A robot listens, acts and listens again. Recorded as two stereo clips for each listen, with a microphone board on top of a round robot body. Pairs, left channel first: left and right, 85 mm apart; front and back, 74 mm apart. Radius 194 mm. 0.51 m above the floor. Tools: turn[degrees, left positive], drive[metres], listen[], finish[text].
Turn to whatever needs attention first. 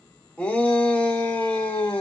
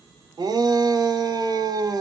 Thought: The shout: 160° left.
Action: turn[160]
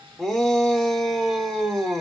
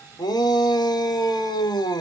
Action: finish[Facing the shout, 1 to 2 m away.]